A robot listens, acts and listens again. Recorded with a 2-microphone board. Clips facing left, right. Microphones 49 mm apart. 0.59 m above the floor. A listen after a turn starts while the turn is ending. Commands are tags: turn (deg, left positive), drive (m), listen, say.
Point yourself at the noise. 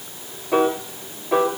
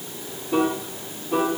<turn deg="55"/>
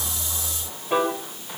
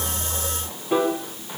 <say>Facing the piano, 1 to 2 m away.</say>